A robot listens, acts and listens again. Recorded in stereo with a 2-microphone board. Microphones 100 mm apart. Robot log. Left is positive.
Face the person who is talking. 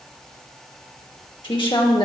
note: The woman speaking: about 55° left or 125° left.
cmd yaw +55
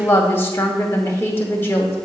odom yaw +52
note: So it is at 30° left.
cmd yaw +30
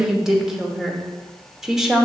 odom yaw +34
end: Facing the woman speaking.